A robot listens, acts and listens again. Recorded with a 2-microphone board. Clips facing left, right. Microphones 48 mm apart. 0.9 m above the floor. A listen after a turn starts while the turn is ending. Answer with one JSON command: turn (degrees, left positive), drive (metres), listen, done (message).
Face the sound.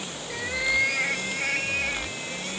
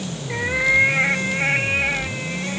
{"turn": -30}
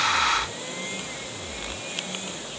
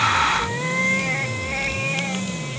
{"turn": -120}
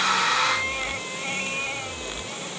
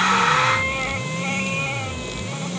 {"listen": true}
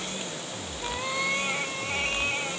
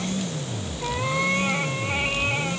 {"turn": -15}
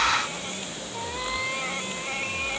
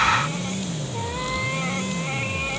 {"listen": true}
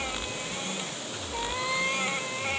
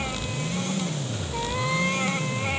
{"listen": true}
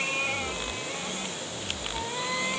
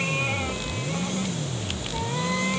{"done": "I heard a cat meowing from this way, but can't make it out now."}